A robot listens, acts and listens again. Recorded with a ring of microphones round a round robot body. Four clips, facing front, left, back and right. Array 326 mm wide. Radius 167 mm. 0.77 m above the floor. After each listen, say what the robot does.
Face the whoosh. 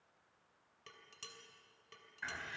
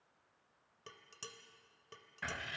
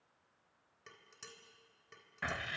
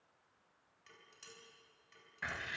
Keep listening.
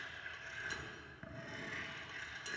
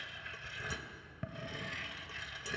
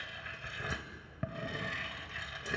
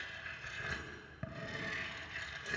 Keep listening.
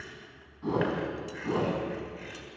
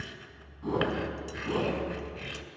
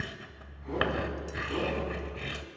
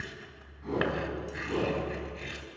Turn 25° left.
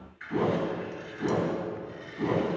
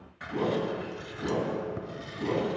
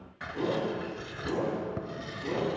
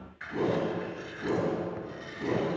Turn 10° left.
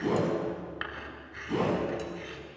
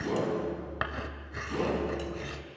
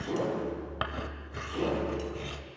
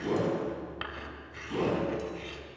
Facing the whoosh, over 4 m away.